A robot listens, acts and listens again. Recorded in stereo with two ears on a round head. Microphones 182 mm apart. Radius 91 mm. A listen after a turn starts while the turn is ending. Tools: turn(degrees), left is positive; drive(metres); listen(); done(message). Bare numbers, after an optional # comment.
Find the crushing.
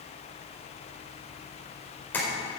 listen()
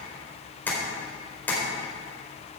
listen()
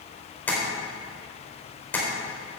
done("I can't make out crushing to turn to.")